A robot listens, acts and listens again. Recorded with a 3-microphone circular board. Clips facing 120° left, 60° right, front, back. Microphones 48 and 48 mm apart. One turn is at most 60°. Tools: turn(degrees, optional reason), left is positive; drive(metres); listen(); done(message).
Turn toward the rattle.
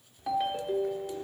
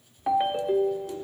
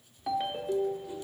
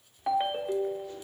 turn(degrees=60, reason="The rattle: 115° left.")
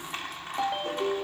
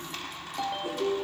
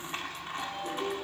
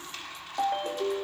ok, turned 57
turn(degrees=60, reason="The rattle is now 60° left.")
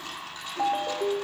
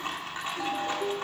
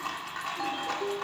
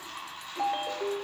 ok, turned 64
done("Found it: a rattle, straight ahead.")